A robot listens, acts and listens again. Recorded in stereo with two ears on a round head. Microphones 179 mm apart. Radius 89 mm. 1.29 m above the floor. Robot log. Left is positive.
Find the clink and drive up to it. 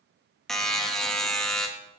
cmd idle
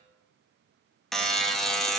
cmd idle
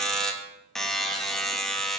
end: I can't make out a clink to turn to.